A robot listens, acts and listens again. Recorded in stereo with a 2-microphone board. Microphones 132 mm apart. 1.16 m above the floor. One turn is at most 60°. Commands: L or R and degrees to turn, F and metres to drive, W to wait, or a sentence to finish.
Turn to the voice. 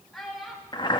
L30
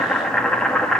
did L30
W
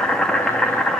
W
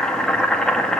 I heard a child speaking, but can't make it out now. It was about 30° right or 150° left.